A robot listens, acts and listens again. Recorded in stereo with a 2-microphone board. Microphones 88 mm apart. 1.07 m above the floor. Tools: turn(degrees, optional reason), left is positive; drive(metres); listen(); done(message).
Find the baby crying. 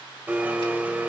listen()
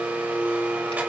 listen()
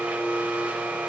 done("I can't make out a baby crying to turn to.")